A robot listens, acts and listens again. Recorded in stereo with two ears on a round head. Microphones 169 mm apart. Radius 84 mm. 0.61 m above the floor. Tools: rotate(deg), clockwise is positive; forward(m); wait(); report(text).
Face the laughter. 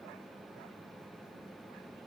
wait()
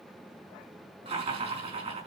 rotate(35)
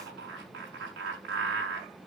rotate(110)
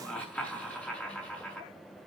rotate(-10)
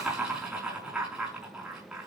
report("Found it: laughter, straight ahead.")